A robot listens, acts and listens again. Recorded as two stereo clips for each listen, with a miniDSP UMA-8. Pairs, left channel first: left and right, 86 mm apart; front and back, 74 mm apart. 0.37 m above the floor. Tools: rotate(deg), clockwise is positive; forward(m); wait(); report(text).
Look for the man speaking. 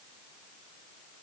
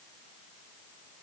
wait()
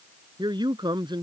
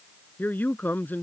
rotate(65)
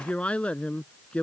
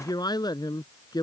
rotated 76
rotate(-15)
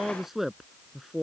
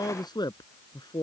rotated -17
report("Found it: a man speaking, straight ahead.")